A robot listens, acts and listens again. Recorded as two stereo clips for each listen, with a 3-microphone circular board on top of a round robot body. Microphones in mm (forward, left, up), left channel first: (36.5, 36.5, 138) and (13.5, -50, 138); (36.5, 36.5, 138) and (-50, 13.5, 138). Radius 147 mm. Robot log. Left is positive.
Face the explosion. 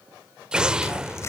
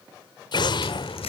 note: The explosion: 25° right.
cmd yaw -25
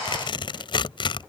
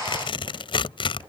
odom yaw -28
end: I heard an explosion from this way, but can't make it out now.